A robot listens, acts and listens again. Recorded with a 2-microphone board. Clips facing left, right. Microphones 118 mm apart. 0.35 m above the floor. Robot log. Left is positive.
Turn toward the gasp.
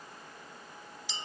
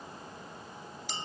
cmd idle
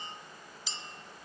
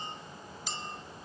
cmd idle
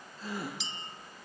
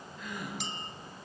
note: The gasp: about 35° left or 145° left.
cmd yaw +35
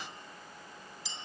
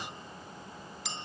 cmd idle
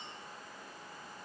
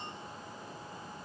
end: I heard a gasp, but can't make it out now. It was about straight ahead or 110° left.